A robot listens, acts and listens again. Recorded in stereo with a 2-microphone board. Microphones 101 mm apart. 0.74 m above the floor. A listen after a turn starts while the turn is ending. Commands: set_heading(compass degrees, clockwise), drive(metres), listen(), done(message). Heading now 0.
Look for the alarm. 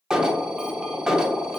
set_heading(30)
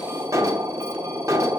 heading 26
set_heading(171)
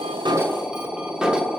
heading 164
set_heading(174)
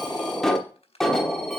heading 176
done("Found it: an alarm, straight ahead, under 1 m away.")